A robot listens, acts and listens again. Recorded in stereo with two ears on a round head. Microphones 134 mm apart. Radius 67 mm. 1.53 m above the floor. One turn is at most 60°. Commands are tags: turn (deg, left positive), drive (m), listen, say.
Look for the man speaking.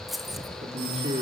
<turn deg="-40"/>
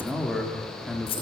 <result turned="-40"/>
<say>Found it: a man speaking, straight ahead.</say>